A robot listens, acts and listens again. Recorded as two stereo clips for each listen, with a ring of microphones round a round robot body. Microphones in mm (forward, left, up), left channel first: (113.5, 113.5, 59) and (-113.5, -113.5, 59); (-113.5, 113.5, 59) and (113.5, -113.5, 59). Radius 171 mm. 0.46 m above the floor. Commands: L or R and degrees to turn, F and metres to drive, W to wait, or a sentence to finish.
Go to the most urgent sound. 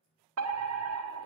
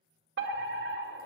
R95
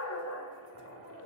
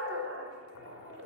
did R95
F1.0
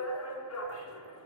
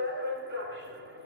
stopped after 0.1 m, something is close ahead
Blocked. The fire alarm is further on, straight ahead.